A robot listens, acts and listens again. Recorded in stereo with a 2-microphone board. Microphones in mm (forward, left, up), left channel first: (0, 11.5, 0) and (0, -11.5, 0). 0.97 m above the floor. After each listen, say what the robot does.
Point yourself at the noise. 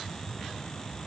Keep listening.
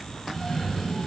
Turn 30° left.
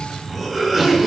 Turn 15° right.
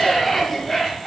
Facing the cough.